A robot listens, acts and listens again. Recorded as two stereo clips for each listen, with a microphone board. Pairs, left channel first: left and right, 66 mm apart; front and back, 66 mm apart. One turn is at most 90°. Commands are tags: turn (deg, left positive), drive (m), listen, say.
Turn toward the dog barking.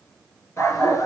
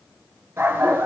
<turn deg="90"/>
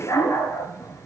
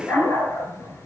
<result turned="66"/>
<turn deg="50"/>
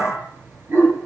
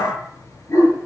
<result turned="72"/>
<turn deg="-40"/>
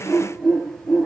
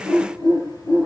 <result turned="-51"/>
<say>Found it: a dog barking, straight ahead.</say>